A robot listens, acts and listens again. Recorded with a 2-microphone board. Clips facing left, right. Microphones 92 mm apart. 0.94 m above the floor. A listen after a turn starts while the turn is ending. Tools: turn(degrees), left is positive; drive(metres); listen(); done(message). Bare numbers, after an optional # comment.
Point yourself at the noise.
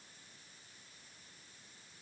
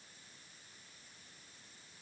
listen()
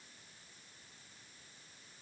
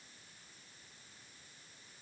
listen()
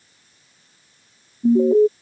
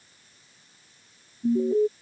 turn(90)
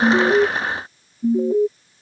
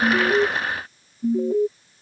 done("Found it: an alarm, straight ahead.")